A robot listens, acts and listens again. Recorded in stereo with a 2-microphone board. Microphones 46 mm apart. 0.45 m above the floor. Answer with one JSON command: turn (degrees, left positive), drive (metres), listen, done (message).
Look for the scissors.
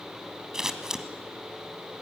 {"turn": -30}
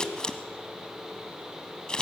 {"turn": 15}
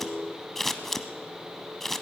{"done": "Found it: scissors, straight ahead."}